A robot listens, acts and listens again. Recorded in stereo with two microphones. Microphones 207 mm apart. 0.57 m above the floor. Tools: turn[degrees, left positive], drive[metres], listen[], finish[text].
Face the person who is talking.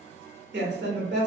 Thought: The woman speaking: about 60° right or 120° right.
Action: turn[-60]
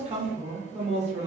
Thought: So it is at 40° right.
Action: turn[-40]
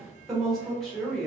Action: finish[Found it: a woman speaking, straight ahead, 1 to 2 m away.]